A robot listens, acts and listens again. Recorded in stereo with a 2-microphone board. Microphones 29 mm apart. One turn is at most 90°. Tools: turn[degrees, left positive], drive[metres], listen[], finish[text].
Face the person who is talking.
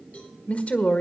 Thought: The woman speaking: about 55° left or 125° left.
Action: turn[55]
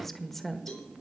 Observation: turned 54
Thought: So it is at 10° left.
Action: turn[10]
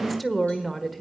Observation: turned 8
Action: finish[Found it: a woman speaking, straight ahead.]